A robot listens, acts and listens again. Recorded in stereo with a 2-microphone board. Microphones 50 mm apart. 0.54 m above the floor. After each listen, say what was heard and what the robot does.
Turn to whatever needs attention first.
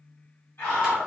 The scream: about 55° left or 125° left. Turn 55° left.
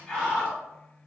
So it is at 10° left. Turn 10° left.
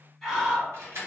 Facing the scream.